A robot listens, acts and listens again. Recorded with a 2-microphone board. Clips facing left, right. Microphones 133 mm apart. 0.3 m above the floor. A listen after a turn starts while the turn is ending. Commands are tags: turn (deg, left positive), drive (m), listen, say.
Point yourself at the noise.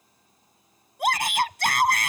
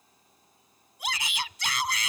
<turn deg="55"/>
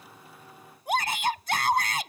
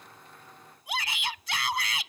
<turn deg="55"/>
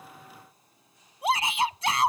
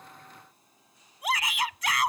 <turn deg="35"/>
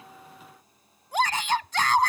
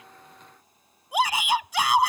<turn deg="-10"/>
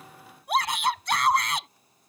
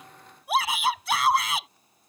<say>Facing the shout.</say>